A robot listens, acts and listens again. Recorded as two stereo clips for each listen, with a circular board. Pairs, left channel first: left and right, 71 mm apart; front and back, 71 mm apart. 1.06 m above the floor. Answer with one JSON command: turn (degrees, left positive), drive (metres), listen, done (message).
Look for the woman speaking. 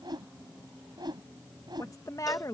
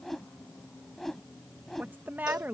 {"turn": 120}
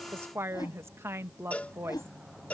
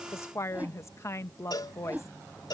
{"turn": -40}
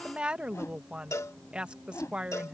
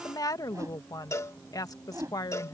{"turn": -15}
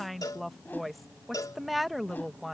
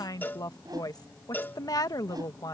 {"done": "Facing the woman speaking."}